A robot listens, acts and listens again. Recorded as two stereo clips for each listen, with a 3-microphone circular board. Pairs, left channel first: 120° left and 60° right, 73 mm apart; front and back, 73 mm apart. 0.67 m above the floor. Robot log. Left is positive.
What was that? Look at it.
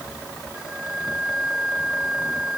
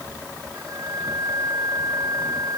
note: The flute: 140° right.
cmd yaw -140
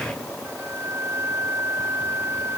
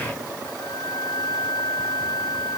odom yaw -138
end: Found it: a flute, straight ahead.